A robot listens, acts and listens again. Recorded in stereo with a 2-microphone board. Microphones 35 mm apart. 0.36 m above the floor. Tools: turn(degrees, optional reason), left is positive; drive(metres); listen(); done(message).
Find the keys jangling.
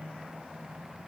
listen()
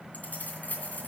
turn(degrees=55, reason="The keys jangling: about 55° left or 125° left.")
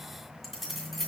done("Found it: keys jangling, straight ahead.")